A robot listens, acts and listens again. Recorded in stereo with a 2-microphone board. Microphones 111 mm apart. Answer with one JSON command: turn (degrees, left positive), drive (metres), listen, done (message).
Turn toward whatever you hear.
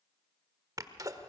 {"turn": -30}
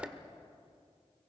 {"turn": -10}
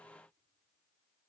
{"done": "Facing where the sneeze came from. I can't hear it now."}